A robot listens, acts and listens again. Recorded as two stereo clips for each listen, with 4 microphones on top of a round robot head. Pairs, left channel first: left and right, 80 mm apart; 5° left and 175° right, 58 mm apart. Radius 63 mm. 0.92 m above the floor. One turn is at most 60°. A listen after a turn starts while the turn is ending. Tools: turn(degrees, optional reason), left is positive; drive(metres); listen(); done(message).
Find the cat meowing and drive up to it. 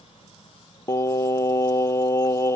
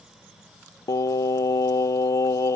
listen()
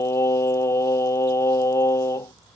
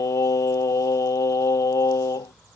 listen()
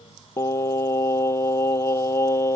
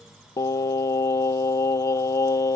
done("I can't make out a cat meowing to turn to.")